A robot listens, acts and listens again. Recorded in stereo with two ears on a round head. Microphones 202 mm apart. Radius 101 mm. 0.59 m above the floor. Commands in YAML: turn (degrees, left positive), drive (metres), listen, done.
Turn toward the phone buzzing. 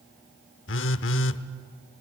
turn: 60
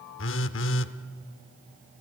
turn: 60
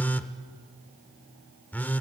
turn: 10
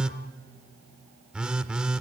done: "Found it: a phone buzzing, straight ahead."